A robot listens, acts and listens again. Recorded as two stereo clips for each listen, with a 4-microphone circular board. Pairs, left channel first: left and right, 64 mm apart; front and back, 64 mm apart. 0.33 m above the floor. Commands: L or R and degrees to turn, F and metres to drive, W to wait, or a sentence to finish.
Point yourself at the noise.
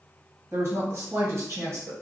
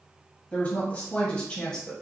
R75
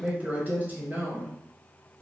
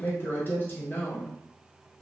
R65
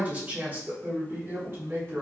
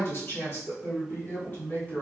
R50
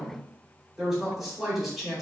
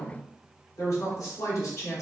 Found it: a woman speaking, straight ahead, 1 to 2 m away.